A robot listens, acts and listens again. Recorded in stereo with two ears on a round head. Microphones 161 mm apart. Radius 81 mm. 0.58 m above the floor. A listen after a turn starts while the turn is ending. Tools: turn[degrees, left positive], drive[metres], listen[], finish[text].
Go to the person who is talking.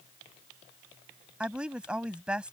Action: turn[-30]
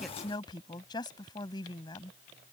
Thought: So it is at 25° left.
Action: turn[25]
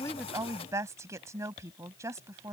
Thought: The woman speaking is now 15° right.
Action: turn[-15]
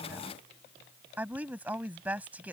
Thought: The woman speaking is now 10° right.
Action: turn[-10]
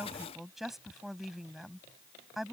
Action: drive[1.0]
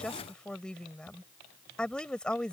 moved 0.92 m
Action: drive[1.0]
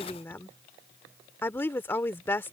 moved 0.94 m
Thought: The woman speaking is now 15° left.
Action: turn[15]
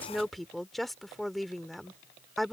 Action: drive[1.0]
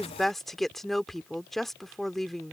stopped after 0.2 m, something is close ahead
Action: finish[I am next to the woman speaking.]